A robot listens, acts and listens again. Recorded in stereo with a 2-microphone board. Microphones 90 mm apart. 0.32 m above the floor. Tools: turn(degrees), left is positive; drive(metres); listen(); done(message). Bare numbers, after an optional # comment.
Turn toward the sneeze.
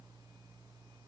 listen()
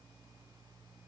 listen()
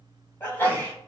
# The sneeze: about 25° left or 155° left.
turn(25)
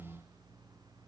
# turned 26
listen()
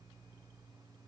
done("I heard a sneeze, but can't make it out now. It was about 5° right or 130° left.")